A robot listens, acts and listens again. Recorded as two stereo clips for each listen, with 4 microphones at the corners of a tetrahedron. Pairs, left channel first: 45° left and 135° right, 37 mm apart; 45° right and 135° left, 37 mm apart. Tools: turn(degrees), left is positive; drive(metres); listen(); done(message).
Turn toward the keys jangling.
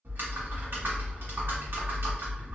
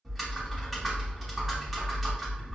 listen()
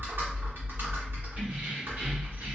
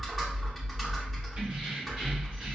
turn(degrees=-170)
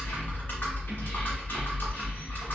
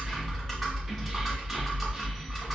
listen()
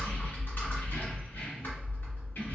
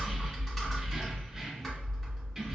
turn(degrees=50)
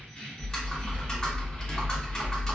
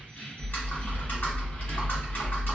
turn(degrees=-10)
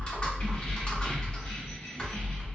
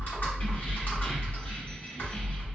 listen()
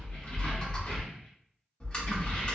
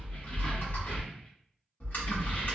done("Found it: keys jangling, straight ahead, 1 to 2 m away.")